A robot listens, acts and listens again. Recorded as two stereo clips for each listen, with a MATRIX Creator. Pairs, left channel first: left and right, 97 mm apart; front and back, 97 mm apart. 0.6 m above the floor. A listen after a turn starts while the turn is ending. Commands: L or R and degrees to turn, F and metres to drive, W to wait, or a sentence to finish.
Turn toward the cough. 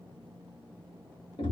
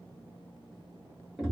W
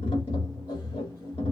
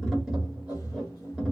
W
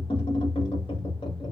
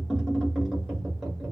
I can't make out a cough, only tapping.